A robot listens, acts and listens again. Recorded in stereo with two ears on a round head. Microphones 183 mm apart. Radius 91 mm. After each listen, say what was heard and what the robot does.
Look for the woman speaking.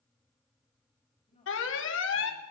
The woman speaking: about 30° left or 150° left. Turn 30° left.
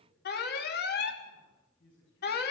So it is at 115° left. Turn 115° left.
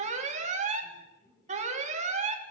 The woman speaking is now 15° left. Turn 15° left.
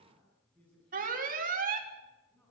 Found it: a woman speaking, straight ahead, over 4 m away.